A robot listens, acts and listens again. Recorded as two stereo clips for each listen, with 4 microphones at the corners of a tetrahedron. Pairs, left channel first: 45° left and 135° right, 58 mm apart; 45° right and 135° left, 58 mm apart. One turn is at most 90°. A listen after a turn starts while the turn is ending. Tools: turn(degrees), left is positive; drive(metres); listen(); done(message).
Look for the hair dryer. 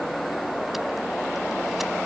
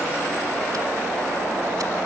listen()
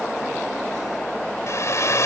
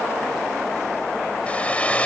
turn(degrees=20)
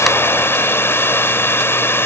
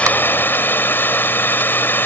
done("Facing the hair dryer.")